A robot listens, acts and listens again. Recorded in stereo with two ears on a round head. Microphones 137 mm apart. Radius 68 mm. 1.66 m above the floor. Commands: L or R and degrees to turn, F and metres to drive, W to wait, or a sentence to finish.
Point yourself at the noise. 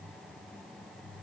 W
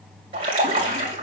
R35
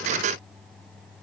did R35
W
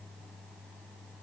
I heard a splash, but can't make it out now. It was about straight ahead or 110° right.